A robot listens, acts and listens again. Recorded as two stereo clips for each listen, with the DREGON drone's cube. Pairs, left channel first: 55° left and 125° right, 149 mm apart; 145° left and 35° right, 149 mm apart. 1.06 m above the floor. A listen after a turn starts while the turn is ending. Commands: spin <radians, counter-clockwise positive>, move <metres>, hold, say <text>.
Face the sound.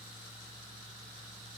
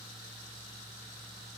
hold
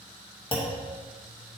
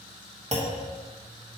say Facing the clunk.